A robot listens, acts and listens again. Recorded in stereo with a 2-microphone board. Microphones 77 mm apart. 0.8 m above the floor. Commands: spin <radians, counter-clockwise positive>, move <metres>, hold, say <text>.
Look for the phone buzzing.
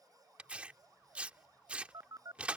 spin -0.96
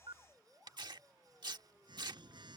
spin -1.31
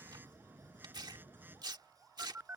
spin -0.44
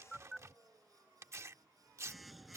say Facing the phone buzzing.